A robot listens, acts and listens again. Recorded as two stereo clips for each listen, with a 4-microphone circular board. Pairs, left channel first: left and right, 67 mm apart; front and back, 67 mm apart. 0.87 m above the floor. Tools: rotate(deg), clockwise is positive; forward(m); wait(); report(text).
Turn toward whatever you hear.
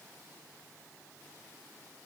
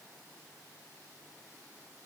wait()
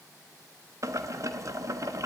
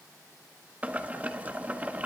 rotate(120)
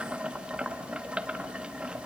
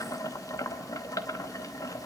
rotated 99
rotate(20)
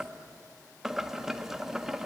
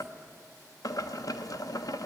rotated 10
report("Facing the boiling, 1 to 2 m away.")